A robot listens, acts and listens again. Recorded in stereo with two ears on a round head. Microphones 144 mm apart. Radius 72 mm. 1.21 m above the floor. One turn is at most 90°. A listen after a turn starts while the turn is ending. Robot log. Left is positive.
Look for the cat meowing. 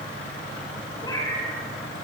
note: The cat meowing: about 25° left or 155° left.
cmd yaw +25
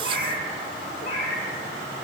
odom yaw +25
note: So it is at 130° left.
cmd yaw +90
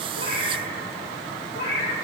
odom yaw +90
note: The cat meowing is now 55° left.
cmd yaw +55
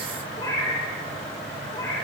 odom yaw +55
note: The cat meowing is now 30° left.
cmd yaw +30
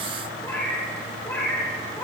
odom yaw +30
note: The cat meowing is now 15° left.
cmd yaw +15
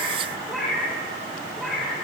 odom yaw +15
end: Facing the cat meowing.